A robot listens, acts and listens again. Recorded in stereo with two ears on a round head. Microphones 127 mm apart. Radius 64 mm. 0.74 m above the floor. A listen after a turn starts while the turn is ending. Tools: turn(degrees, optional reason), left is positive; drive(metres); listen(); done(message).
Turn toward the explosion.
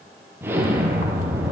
turn(degrees=-15, reason="The explosion: about 15° right or 165° right.")
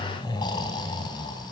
listen()
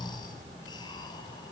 done("I heard an explosion, but can't make it out now. It was about straight ahead or 150° right.")